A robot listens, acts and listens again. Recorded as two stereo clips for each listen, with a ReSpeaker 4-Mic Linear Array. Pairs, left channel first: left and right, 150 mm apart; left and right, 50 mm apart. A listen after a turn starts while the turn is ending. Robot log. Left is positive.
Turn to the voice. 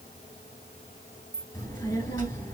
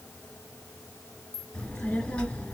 note: The child speaking: about 25° left or 155° left.
cmd yaw +25
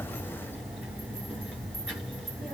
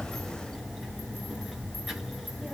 end: Facing the child speaking, 2 to 4 m away.